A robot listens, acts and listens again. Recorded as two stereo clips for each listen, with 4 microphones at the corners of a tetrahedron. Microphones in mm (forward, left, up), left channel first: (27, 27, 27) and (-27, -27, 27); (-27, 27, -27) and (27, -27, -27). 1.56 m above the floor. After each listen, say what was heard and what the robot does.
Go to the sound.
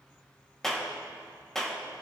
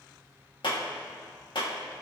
The clap: 130° left. Turn 130° left.
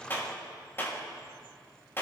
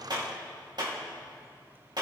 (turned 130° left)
The clap is now 15° right. Turn 15° right.
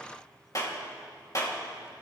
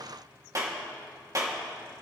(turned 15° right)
Drive 1.0 m forward.
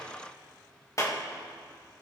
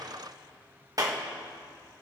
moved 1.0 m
Drive 1.0 m forward.
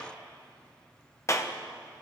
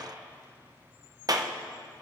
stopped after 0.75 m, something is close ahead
Arrived at the clap, straight ahead.